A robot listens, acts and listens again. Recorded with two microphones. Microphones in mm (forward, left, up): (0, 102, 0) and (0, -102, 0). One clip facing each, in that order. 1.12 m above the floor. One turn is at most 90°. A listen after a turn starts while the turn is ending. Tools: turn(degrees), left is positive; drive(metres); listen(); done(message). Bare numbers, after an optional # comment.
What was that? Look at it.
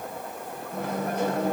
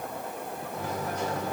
# The microwave: about 60° left or 120° left.
turn(60)
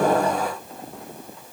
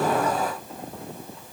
listen()
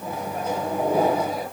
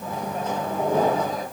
# So it is at 10° left.
turn(10)
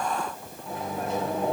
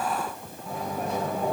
done("Found it: a microwave, straight ahead, 1 to 2 m away.")